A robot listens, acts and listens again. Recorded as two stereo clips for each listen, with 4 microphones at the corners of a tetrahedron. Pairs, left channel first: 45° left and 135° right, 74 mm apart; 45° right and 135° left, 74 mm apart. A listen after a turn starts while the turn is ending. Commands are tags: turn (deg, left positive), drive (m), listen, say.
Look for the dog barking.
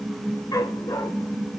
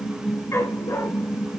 <turn deg="10"/>
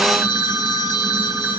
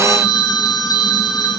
<listen/>
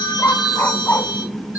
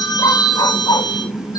<turn deg="-20"/>
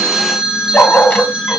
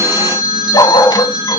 <turn deg="-25"/>
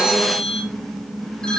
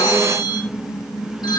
<listen/>
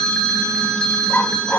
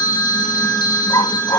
<turn deg="-25"/>
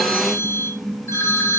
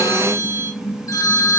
<listen/>
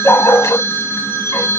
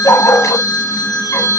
<say>Found it: a dog barking, straight ahead.</say>